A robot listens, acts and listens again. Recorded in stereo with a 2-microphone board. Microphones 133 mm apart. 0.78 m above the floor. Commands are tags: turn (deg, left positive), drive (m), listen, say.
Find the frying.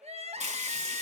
<turn deg="-60"/>
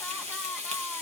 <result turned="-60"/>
<turn deg="-55"/>
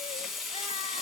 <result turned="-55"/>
<say>Facing the frying, 1 to 2 m away.</say>